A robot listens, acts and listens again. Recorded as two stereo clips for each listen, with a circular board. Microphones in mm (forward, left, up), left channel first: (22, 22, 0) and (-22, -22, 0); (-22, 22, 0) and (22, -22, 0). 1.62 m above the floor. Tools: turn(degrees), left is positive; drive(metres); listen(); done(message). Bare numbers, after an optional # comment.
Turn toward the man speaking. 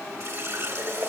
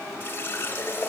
listen()
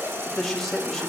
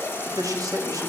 # The man speaking: 40° right.
turn(-40)
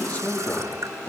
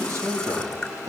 # The man speaking is now 15° right.
turn(-15)
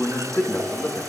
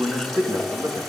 done("Found it: a man speaking, straight ahead, 2 to 4 m away.")